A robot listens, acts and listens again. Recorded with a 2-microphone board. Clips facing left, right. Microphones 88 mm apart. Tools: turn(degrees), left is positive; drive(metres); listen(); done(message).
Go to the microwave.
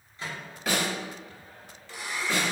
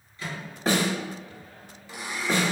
turn(degrees=30)
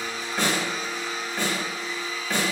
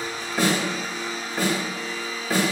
listen()
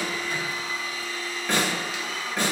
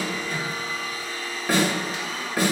listen()
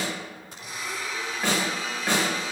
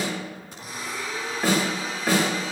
done("I heard a microwave, but can't make it out now. It was about straight ahead or 120° left. I did not reach it.")